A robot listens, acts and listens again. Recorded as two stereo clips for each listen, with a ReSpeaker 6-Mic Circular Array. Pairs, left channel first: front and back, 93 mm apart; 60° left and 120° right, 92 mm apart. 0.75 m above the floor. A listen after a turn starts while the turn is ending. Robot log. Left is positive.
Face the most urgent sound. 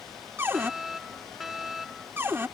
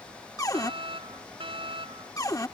note: The fire alarm: 90° right.
cmd yaw -90
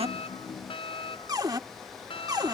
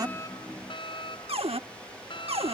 note: The fire alarm is now 25° left.
cmd yaw +25
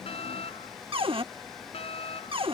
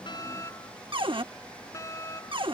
end: Found it: a fire alarm, straight ahead.